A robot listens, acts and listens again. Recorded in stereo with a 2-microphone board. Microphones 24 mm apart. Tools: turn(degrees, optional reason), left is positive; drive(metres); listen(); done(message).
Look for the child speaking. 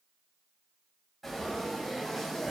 listen()
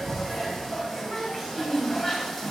turn(degrees=-20, reason="The child speaking: about 20° right or 160° right.")
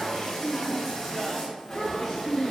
turn(degrees=10, reason="So it is at 10° left.")
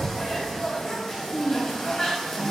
done("Facing the child speaking, 2 to 4 m away.")